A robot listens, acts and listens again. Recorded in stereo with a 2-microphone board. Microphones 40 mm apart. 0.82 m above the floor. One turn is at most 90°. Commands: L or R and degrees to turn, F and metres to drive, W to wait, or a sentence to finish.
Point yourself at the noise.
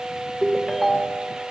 R30
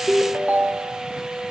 R90
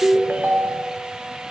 R55
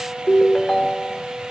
L10
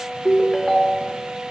Facing the ringtone.